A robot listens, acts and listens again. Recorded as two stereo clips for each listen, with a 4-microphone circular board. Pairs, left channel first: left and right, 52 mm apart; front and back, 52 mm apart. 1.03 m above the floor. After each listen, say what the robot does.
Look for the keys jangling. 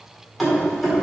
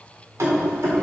Turn 170° right.
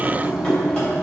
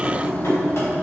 Turn 20° left.
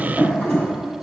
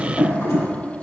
Turn 10° left.
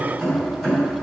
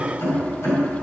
Found it: keys jangling, straight ahead.